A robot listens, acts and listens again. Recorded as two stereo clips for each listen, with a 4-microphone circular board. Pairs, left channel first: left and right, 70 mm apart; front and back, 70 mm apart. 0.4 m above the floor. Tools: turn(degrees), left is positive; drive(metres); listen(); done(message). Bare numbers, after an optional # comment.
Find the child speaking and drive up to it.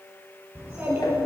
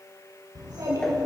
# The child speaking: 150° right.
turn(-150)
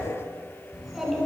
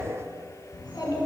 drive(1.0)
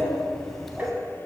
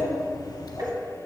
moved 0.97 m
drive(1.0)
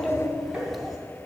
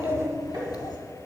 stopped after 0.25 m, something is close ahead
done("I am next to the child speaking.")